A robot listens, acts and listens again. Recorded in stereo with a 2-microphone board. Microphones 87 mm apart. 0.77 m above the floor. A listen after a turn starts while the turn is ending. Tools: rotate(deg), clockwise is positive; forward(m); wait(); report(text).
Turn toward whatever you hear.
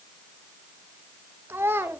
rotate(25)
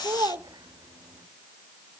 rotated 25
rotate(125)
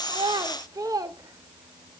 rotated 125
rotate(45)
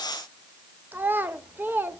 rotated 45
rotate(25)
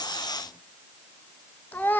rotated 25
rotate(-20)
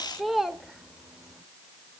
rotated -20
report("Found it: a child speaking, straight ahead, under 1 m away.")